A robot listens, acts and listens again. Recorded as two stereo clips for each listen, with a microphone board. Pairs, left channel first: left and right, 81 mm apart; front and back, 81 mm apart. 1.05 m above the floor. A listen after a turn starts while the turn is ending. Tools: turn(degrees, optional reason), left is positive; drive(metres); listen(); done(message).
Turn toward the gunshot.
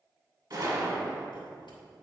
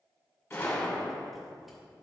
turn(degrees=-60, reason="The gunshot: 60° right.")
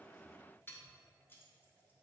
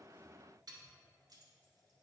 done("Facing where the gunshot came from. I can't hear it now.")